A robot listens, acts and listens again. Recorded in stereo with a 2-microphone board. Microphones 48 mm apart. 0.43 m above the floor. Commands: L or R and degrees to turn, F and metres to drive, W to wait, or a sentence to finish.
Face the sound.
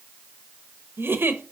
R55
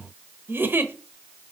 R65
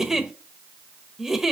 R10
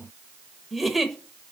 Found it: a giggle, straight ahead, under 1 m away.